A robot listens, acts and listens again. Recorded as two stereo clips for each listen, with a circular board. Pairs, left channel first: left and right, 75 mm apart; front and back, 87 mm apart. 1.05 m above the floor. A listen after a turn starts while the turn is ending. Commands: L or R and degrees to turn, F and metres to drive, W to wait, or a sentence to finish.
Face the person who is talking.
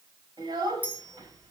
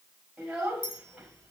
R100
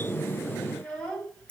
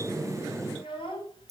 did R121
L20
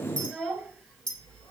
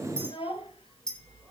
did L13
Facing the child speaking, over 4 m away.